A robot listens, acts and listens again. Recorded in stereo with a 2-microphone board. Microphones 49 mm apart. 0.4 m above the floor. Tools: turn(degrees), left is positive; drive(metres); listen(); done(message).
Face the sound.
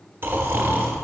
turn(degrees=-55)
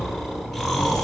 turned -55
done("Facing the snoring, 1 to 2 m away.")